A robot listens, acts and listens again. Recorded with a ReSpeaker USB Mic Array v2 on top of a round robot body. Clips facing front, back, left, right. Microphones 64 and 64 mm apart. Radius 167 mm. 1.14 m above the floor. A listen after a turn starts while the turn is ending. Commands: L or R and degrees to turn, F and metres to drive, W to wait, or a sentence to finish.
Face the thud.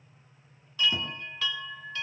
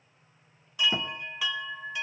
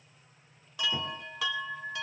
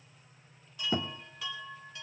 R115
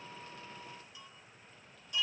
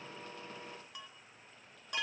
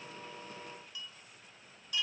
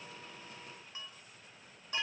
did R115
I heard a thud from this way, but can't make it out now.